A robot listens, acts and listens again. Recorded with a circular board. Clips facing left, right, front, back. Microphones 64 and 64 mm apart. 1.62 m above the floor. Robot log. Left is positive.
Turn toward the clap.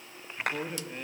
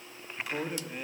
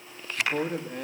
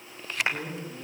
note: The clap: 115° left.
cmd yaw +115
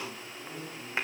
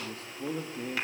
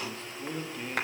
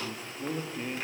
cmd idle
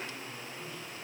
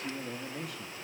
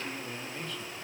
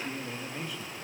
cmd idle
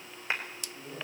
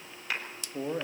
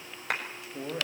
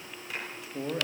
note: The clap is now 25° left.
cmd yaw +25
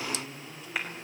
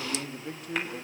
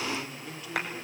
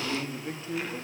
cmd idle
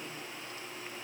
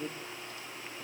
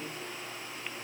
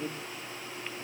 cmd idle
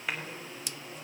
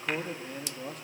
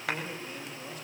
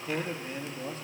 end: Facing where the clap came from. I can't hear it now.